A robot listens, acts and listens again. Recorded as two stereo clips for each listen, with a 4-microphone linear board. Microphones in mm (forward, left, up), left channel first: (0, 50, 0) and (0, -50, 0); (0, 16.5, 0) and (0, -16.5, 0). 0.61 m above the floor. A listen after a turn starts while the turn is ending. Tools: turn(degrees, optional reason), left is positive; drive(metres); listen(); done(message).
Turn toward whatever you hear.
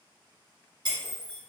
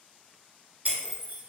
turn(degrees=-45, reason="The breaking glass: about 45° right or 135° right.")
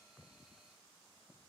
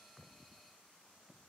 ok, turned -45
listen()
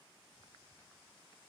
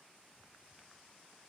done("I heard breaking glass, but can't make it out now. It was about straight ahead or 90° right.")